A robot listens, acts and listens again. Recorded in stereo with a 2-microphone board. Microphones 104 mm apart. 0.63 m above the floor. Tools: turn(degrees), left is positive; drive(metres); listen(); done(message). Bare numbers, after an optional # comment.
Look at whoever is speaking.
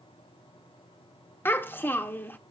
# The child speaking: about 20° left or 160° left.
turn(20)
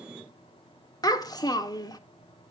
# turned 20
# So it is at 140° left.
turn(140)
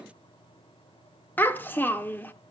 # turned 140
# The child speaking is now 20° left.
turn(20)
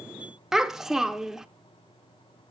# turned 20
done("Facing the child speaking, under 1 m away.")